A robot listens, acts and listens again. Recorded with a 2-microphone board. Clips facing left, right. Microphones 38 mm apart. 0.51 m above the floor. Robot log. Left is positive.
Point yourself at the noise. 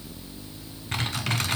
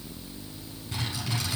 note: The typing on a keyboard: about 60° left or 120° left.
cmd yaw +60
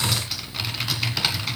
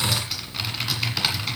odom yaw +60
end: Facing the typing on a keyboard.